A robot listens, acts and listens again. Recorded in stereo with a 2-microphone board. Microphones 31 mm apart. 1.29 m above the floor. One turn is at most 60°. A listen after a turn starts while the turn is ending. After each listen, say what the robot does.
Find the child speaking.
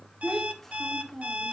Turn 30° left.
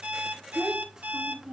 Turn 20° right.
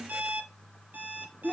Found it: a child speaking, straight ahead, 1 to 2 m away.